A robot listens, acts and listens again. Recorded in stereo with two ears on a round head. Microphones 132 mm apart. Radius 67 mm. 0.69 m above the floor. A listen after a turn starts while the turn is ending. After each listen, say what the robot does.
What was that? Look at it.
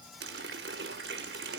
Turn 90° right.
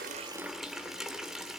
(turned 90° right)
Facing the running tap, 1 to 2 m away.